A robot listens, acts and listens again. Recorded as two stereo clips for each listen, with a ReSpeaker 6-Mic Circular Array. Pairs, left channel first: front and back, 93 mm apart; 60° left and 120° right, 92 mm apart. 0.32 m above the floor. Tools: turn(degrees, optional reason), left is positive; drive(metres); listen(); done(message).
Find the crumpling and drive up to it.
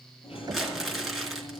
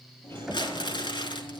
turn(degrees=90, reason="The crumpling: 90° left.")
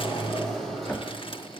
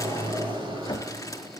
listen()
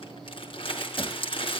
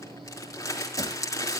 drive(metres=1.0)
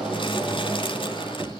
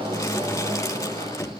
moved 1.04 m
listen()
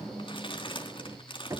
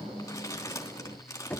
drive(metres=1.0)
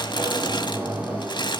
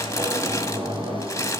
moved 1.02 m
turn(degrees=10, reason="The crumpling is now 10° left.")
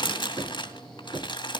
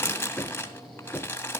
drive(metres=1.0)
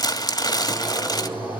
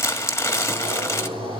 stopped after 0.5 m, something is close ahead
turn(degrees=10, reason="The crumpling is now 10° left.")
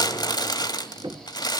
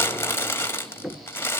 done("Arrived at the crumpling, straight ahead.")